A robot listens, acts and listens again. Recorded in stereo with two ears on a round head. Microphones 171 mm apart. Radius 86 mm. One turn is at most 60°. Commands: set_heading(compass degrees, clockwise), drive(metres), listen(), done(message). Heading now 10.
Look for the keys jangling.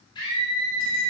listen()
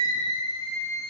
listen()
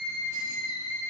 done("I can't make out keys jangling, only a scream.")